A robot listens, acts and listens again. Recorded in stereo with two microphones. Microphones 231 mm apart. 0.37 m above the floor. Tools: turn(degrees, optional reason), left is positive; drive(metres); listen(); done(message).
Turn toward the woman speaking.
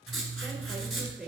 turn(degrees=-30)
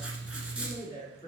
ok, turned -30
turn(degrees=20, reason="So it is at 20° left.")
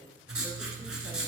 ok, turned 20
listen()
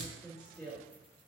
done("Found it: a woman speaking, straight ahead, 2 to 4 m away.")